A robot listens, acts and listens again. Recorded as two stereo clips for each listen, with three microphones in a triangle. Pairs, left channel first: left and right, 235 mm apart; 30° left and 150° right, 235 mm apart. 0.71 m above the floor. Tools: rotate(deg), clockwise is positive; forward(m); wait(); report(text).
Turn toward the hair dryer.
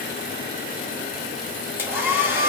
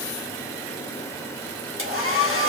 rotate(170)
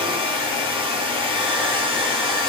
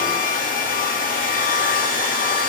rotate(25)
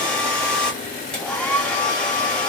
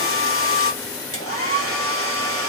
report("Facing the hair dryer.")